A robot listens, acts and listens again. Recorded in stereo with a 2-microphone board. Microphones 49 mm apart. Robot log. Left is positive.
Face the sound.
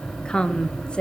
note: The woman speaking: about 20° left or 160° left.
cmd yaw +20
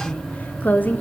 note: So it is at 145° left.
cmd yaw +145
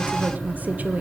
note: The woman speaking is now 35° right.
cmd yaw -35
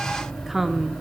end: Found it: a woman speaking, straight ahead.